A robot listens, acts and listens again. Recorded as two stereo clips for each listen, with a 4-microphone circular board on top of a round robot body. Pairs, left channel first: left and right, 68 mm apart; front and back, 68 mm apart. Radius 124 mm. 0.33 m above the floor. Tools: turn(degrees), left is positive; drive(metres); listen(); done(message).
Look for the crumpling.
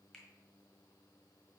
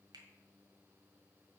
listen()
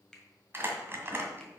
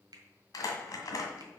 turn(degrees=-35)
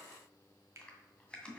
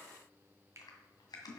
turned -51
turn(degrees=15)
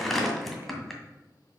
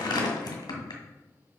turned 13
done("Facing the crumpling, 2 to 4 m away.")